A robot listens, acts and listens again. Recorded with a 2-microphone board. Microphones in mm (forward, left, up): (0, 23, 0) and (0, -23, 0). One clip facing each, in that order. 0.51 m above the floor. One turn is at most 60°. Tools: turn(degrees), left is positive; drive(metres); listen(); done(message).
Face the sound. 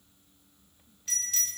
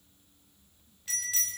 turn(degrees=-30)
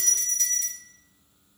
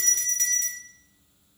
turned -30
turn(degrees=-60)
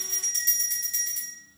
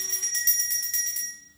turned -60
turn(degrees=-60)
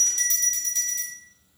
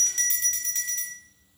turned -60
turn(degrees=-40)
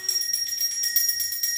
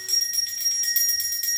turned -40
turn(degrees=-15)
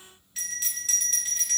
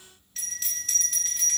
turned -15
done("Facing the bell, 1 to 2 m away.")